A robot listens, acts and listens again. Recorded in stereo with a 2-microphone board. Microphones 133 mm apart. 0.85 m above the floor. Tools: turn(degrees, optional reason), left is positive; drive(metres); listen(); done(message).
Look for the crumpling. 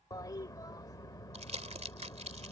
turn(degrees=-55, reason="The crumpling: about 55° right or 125° right.")
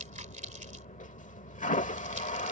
turn(degrees=-70, reason="So it is at 70° right.")
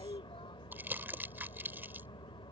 turn(degrees=-15, reason="The crumpling is now 15° right.")
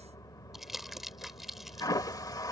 done("Facing the crumpling.")